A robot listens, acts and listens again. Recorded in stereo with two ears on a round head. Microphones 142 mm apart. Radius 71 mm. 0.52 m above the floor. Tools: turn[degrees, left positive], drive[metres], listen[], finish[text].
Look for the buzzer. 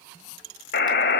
Thought: The buzzer: about 65° left or 115° left.
Action: turn[65]
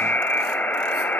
Thought: So it is at 10° left.
Action: turn[10]
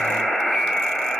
Action: finish[Facing the buzzer, 2 to 4 m away.]